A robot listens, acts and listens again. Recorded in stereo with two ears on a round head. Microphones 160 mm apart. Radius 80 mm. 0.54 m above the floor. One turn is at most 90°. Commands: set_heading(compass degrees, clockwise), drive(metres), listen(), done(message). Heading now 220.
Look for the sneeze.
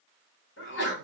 set_heading(155)
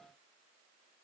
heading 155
listen()
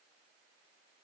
done("I heard a sneeze, but can't make it out now. It was about straight ahead or 50° left.")